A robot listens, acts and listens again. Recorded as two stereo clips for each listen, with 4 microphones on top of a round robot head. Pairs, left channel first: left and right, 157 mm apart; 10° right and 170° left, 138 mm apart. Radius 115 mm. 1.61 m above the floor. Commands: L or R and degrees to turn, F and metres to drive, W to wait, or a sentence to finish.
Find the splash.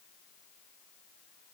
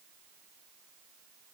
W
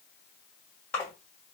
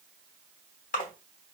L10
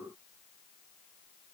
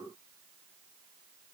Facing where the splash came from. I can't hear it now.